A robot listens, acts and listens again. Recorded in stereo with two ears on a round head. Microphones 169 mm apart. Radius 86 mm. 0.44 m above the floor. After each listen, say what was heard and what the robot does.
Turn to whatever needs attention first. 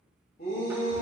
The shout: about 50° left or 130° left. Turn 50° left.
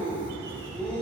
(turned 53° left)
So it is at 10° left. Turn 10° left.
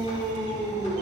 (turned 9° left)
Facing the shout.